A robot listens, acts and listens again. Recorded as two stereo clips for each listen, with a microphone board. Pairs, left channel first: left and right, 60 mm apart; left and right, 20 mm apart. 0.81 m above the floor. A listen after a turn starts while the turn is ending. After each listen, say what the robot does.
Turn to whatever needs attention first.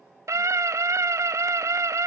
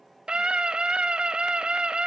Turn 55° right.
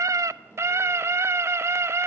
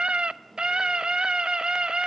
Turn 60° right.
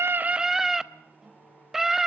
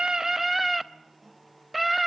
Turn 10° right.
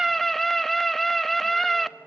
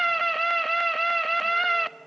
Found it: a scream, straight ahead, under 1 m away.